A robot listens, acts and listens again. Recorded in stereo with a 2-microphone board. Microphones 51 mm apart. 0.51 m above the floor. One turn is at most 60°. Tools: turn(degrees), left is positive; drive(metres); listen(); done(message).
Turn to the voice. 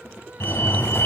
listen()
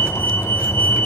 listen()
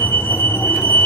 done("I can't make out anyone speaking, only a fire alarm.")